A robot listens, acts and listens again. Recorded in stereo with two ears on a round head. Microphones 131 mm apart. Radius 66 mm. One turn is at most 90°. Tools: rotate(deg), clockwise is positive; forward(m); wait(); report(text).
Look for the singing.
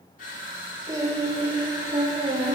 rotate(40)
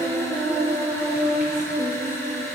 rotate(30)
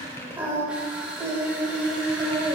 rotate(20)
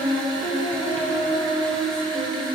report("Facing the singing.")